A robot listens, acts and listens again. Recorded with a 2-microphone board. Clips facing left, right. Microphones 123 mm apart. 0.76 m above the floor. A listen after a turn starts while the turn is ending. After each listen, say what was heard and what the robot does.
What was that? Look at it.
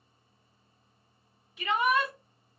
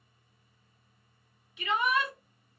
The shout: about 40° left or 140° left. Turn 40° left.
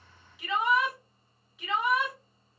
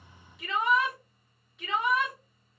Facing the shout, 1 to 2 m away.